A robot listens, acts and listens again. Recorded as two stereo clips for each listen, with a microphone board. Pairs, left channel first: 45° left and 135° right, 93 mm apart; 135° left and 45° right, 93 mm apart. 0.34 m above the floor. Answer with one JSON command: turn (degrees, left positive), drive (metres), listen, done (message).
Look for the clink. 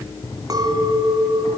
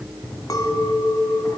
{"turn": 180}
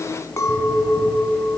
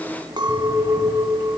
{"turn": -10}
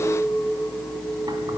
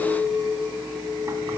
{"done": "Facing the clink, 1 to 2 m away."}